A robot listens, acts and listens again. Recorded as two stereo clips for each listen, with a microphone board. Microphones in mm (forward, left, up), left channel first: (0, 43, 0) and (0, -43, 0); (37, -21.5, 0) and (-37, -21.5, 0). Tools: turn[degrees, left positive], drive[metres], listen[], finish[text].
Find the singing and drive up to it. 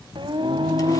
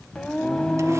Thought: The singing: 75° right.
Action: turn[-75]
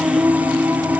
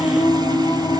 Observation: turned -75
Thought: The singing is now 15° right.
Action: turn[-15]
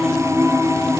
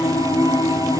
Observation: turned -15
Action: drive[1.0]
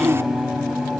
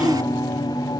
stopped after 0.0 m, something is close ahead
Action: finish[Something is in my way. I am facing the singing but have not reached it.]